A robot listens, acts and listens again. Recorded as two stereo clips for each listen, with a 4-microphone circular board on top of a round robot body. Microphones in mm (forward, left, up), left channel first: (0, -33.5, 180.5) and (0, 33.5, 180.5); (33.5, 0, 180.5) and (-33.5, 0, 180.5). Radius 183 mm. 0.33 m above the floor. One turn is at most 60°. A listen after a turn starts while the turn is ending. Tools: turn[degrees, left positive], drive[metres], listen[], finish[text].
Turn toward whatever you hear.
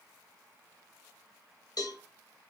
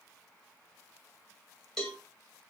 Thought: The cowbell: 85° right.
Action: turn[-60]
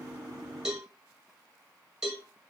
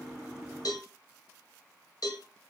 Action: finish[Found it: a cowbell, straight ahead, under 1 m away.]